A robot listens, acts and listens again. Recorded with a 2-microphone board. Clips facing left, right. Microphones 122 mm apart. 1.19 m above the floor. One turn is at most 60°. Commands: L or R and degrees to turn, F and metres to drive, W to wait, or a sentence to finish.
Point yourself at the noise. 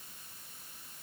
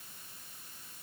W
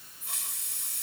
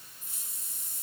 L60
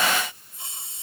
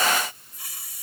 L25
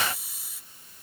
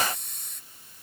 Found it: a hiss, straight ahead.